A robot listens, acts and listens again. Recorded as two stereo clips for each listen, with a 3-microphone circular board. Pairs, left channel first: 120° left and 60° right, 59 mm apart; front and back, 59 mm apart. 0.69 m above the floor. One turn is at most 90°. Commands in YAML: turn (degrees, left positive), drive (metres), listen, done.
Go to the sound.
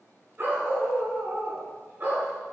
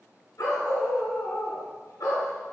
drive: 1.0
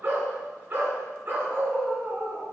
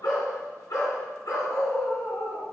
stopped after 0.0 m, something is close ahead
done: "Blocked. The dog barking is further on, straight ahead."